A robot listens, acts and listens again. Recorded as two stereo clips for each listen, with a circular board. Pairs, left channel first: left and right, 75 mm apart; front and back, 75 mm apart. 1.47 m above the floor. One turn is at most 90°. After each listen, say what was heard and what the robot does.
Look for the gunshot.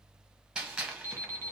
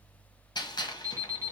The gunshot: 10° right. Turn 10° right.
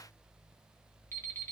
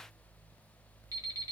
Facing where the gunshot came from. I can't hear it now.